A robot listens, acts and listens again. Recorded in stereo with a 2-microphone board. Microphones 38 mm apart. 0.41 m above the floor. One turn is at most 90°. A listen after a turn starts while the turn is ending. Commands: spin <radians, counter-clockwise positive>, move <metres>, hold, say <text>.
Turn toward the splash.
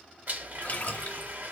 spin 0.96
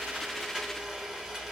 hold
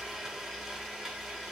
say I heard a splash, but can't make it out now. It was about straight ahead or 70° left.